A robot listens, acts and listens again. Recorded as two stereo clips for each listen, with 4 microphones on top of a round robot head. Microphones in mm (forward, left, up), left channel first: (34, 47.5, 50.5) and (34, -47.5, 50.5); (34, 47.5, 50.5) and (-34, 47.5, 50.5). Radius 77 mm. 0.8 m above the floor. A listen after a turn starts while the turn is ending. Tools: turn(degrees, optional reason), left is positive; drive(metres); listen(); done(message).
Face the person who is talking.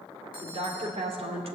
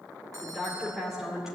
turn(degrees=-95, reason="The woman speaking: 95° right.")
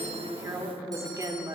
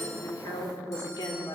turn(degrees=-40, reason="The woman speaking is now 40° right.")
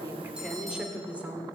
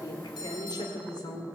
turn(degrees=-20, reason="The woman speaking is now 20° right.")
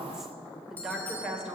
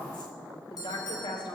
turn(degrees=-10, reason="The woman speaking is now 10° right.")
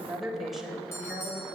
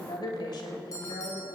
done("Found it: a woman speaking, straight ahead, 2 to 4 m away.")